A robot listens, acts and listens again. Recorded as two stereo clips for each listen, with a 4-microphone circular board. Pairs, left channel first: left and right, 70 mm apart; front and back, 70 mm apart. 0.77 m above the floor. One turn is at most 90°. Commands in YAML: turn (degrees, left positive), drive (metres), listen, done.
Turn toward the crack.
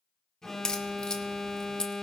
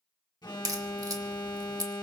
turn: 90
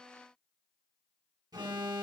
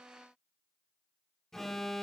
turn: 80
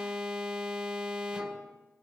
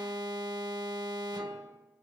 done: "I heard a crack from this way, but can't make it out now."